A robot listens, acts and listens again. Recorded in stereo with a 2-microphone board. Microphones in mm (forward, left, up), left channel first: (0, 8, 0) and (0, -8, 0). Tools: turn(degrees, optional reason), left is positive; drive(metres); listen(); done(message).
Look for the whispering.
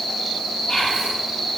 turn(degrees=75, reason="The whispering: about 75° left or 105° left.")
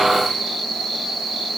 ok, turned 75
listen()
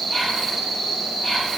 listen()
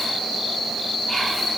done("I heard whispering, but can't make it out now. It was about straight ahead or 30° left.")